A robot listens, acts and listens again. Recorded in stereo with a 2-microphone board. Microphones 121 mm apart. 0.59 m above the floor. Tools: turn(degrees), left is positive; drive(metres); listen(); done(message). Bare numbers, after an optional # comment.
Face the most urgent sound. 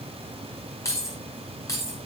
listen()
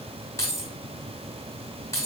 listen()
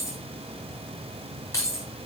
done("I can't make out anything urgent to turn to.")